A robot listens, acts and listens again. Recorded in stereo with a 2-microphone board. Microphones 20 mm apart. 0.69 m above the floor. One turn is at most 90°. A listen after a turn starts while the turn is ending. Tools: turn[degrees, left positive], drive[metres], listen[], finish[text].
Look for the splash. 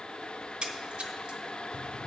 Thought: The splash: about 55° right or 125° right.
Action: turn[-55]
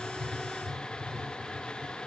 Action: listen[]
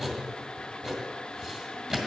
Action: finish[I heard a splash, but can't make it out now. It was about straight ahead or 70° right.]